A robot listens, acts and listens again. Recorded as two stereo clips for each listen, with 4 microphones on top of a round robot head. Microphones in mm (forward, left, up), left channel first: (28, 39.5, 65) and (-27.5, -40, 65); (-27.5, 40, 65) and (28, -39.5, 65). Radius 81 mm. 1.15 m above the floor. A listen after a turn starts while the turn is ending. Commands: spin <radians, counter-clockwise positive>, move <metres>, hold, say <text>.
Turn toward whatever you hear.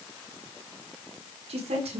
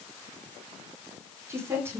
spin -2.09
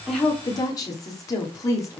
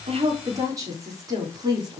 say Found it: a woman speaking, straight ahead.